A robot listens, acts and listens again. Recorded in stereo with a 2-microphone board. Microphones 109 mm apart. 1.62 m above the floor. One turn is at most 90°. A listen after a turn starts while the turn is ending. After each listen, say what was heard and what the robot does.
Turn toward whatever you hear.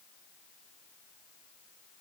Keep listening.
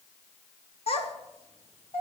The child speaking: about 65° left or 115° left. Turn 65° left.
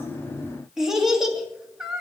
Found it: a child speaking, straight ahead.